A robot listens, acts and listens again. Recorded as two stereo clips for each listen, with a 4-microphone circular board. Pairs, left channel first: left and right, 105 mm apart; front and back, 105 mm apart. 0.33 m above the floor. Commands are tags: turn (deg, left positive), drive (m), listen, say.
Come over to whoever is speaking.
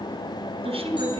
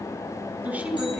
<turn deg="-105"/>
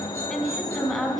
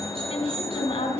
<drive m="1.0"/>
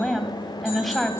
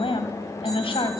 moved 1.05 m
<drive m="1.0"/>
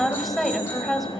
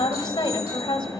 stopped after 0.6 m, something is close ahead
<say>Arrived at the woman speaking, straight ahead.</say>